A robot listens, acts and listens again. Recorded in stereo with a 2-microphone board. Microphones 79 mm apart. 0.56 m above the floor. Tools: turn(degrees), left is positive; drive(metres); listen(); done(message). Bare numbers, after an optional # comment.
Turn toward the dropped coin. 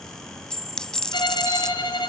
turn(30)
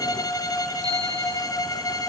listen()
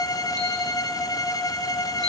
done("I heard a dropped coin, but can't make it out now. It was about 20° right or 140° left.")